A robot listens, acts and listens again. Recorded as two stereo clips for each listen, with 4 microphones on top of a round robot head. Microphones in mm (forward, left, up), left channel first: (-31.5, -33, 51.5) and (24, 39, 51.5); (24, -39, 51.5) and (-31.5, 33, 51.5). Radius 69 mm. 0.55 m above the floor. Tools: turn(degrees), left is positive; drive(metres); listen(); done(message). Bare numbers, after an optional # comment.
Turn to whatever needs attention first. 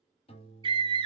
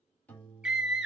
# The scream: 45° left.
turn(45)
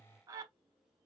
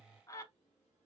done("Facing the scream, 1 to 2 m away.")